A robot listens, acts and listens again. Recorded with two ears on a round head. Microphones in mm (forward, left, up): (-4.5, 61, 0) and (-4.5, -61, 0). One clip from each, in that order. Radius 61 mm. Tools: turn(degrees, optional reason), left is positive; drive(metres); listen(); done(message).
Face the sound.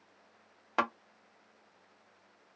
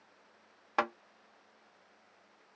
turn(degrees=30)
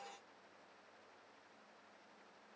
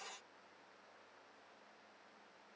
listen()
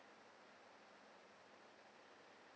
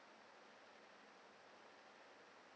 done("I heard a thud, but can't make it out now. It was about 25° right or 145° left.")